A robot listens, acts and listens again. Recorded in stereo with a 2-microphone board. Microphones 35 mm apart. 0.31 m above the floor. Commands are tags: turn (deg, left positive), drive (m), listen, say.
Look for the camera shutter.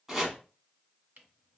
<turn deg="-55"/>
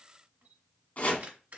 <turn deg="-60"/>
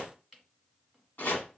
<say>Found it: a camera shutter, straight ahead, 1 to 2 m away.</say>